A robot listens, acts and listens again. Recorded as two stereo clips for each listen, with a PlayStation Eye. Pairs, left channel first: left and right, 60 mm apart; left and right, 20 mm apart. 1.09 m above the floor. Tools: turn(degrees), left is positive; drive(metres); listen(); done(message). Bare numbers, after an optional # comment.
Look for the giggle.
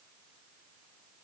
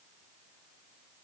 listen()
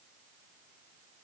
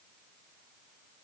listen()
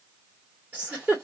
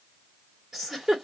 # The giggle: about 25° right or 155° right.
turn(-25)
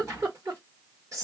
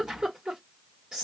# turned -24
# So it is at 130° right.
turn(-130)
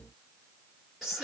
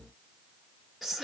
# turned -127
done("Found it: a giggle, straight ahead.")